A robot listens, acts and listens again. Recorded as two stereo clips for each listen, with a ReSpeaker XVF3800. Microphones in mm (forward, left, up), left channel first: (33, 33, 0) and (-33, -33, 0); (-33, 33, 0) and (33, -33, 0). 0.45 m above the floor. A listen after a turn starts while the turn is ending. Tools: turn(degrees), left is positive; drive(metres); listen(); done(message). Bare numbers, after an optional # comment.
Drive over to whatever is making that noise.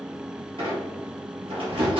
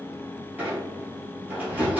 # The squeak: 115° right.
turn(-115)
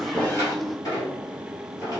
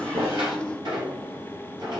drive(1.0)
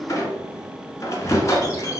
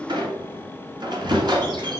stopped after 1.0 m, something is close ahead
# The squeak is now 10° right.
turn(-10)
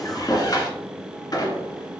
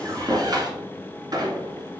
done("I am next to the squeak.")